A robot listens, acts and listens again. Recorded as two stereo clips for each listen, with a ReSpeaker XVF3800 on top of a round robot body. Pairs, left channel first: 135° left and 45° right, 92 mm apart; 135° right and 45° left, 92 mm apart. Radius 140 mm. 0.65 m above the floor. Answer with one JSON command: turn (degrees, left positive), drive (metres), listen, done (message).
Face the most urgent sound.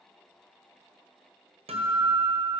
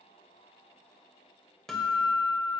{"listen": true}
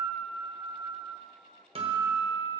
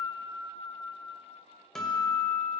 {"listen": true}
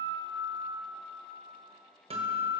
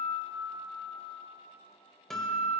{"done": "I can't make out anything urgent, only a guitar."}